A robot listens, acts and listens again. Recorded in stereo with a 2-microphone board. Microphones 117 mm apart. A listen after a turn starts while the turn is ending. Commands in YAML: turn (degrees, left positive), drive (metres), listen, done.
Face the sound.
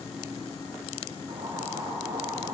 turn: -30
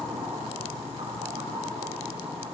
turn: -120
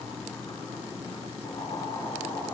turn: 35
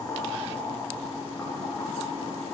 turn: 15
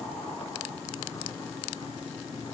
listen: true
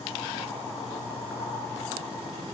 done: "Found it: boiling, straight ahead, over 4 m away."